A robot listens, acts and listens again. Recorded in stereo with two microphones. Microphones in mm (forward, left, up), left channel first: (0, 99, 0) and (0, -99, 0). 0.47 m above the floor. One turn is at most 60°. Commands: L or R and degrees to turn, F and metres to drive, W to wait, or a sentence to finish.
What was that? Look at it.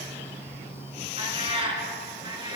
R25
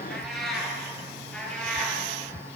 Found it: a cat meowing, straight ahead, over 4 m away.